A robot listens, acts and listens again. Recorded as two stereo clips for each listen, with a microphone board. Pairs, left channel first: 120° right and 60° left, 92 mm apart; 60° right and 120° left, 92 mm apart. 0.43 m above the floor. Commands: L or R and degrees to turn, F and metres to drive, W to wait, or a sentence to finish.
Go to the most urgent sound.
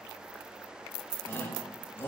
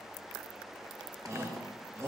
L175
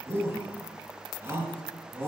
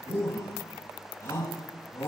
F1.0
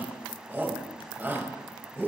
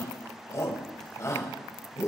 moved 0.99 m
F1.0
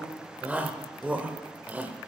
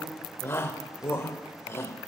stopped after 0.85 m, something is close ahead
R10
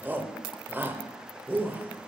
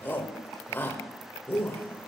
I am next to the shout.